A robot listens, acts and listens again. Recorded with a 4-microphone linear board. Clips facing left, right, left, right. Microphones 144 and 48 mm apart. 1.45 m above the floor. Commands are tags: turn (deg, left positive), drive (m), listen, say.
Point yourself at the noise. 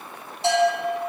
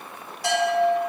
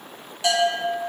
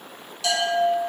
<turn deg="25"/>
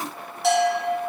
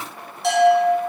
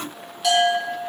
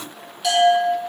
<say>Found it: a bell, straight ahead.</say>